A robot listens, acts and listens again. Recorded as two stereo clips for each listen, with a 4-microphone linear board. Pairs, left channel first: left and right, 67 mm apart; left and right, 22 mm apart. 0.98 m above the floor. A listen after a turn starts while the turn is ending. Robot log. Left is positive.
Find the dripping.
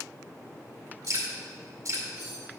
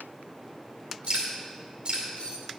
note: The dripping: about 50° right or 130° right.
cmd yaw -50
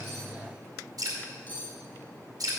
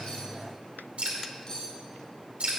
note: So it is at 75° right.
cmd yaw -75
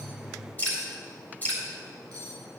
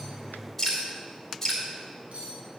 note: The dripping is now 25° left.
cmd yaw +25
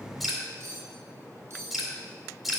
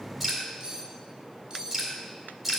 end: Found it: dripping, straight ahead.